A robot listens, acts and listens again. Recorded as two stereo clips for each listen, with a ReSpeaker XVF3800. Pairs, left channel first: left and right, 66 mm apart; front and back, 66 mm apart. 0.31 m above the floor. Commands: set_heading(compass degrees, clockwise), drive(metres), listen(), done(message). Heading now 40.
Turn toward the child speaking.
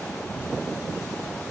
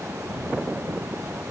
listen()
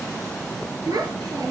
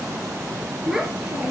set_heading(140)
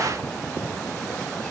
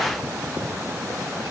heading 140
listen()
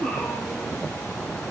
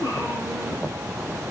set_heading(130)
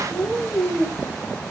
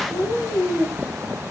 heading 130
done("Found it: a child speaking, straight ahead.")